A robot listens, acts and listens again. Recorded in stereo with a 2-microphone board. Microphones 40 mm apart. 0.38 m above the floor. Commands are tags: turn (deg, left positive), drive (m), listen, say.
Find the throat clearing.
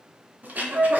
<turn deg="-45"/>
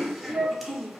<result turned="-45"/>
<say>Found it: throat clearing, straight ahead, under 1 m away.</say>